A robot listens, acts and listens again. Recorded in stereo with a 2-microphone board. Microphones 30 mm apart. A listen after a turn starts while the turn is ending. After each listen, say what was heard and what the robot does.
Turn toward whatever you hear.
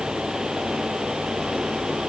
Keep listening.
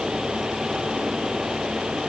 Keep listening.
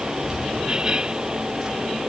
Turn 30° right.
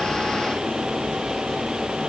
Keep listening.
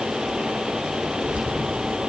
So it is at 145° right. Turn 145° right.
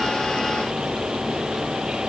Keep listening.
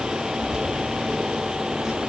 The keys jangling is now 25° right. Turn 25° right.
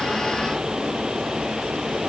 Keep listening.
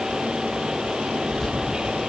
Found it: keys jangling, straight ahead, over 4 m away.